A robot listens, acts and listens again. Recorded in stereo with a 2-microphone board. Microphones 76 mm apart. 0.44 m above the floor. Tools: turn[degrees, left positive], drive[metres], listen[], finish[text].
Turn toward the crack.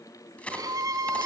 Thought: The crack: about 15° left or 165° left.
Action: turn[15]
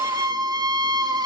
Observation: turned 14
Action: listen[]
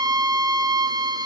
Action: finish[I heard a crack, but can't make it out now. It was about 5° left or 150° left.]